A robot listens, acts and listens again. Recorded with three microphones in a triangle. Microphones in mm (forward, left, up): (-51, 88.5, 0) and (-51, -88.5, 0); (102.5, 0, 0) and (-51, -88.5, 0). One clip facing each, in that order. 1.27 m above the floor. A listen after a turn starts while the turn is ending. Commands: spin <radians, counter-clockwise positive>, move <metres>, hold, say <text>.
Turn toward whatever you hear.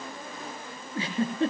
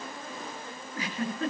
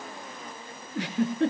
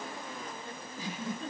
spin 0.52
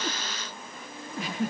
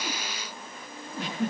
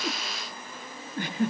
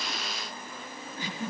say Facing the giggle, over 4 m away.